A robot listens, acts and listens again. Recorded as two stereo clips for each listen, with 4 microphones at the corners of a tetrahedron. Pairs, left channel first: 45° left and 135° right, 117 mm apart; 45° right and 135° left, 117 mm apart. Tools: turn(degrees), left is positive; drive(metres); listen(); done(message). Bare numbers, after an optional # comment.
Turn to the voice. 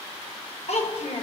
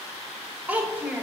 # The child speaking: 60° left.
turn(60)
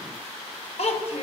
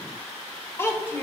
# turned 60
# The child speaking is now 25° left.
turn(25)
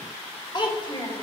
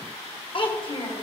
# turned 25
done("Found it: a child speaking, straight ahead.")